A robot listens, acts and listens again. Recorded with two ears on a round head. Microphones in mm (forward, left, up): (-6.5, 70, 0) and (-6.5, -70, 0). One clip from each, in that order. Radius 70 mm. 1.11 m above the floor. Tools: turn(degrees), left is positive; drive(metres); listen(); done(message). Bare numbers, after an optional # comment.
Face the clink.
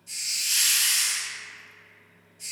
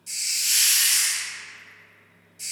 listen()
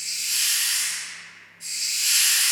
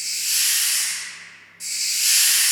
listen()
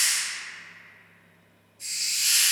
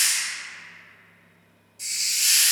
done("I can't make out a clink to turn to.")